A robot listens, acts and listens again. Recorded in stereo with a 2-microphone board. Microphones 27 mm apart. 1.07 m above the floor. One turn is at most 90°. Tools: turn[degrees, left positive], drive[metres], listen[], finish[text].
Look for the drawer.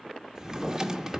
Thought: The drawer: about 20° right or 160° right.
Action: turn[-20]
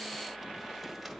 Action: listen[]
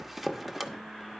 Action: finish[Facing the drawer.]